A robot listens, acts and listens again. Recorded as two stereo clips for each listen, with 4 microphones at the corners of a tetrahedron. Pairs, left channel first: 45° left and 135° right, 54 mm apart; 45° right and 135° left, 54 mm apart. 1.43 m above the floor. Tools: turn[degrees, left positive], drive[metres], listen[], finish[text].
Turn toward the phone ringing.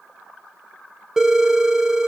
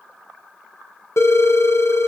Thought: The phone ringing: 55° right.
Action: turn[-55]
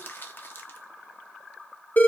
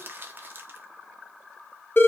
Action: finish[Facing the phone ringing, under 1 m away.]